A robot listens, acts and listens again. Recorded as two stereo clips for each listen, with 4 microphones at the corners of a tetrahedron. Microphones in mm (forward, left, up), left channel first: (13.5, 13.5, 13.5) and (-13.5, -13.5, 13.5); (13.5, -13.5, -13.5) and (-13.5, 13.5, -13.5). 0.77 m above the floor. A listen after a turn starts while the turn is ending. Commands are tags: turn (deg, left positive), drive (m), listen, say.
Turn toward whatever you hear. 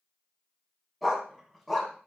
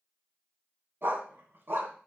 <turn deg="130"/>
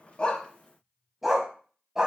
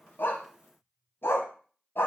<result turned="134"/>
<turn deg="-60"/>
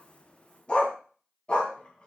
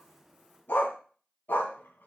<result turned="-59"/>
<turn deg="-15"/>
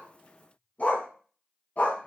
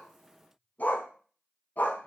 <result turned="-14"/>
<say>Facing the dog barking, 2 to 4 m away.</say>